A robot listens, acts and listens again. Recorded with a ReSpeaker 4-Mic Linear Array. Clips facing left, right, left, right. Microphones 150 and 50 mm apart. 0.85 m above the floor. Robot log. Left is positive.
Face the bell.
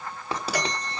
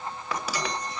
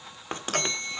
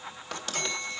note: The bell: about 60° left or 120° left.
cmd yaw +60
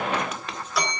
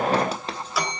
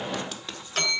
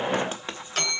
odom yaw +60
end: Found it: a bell, straight ahead.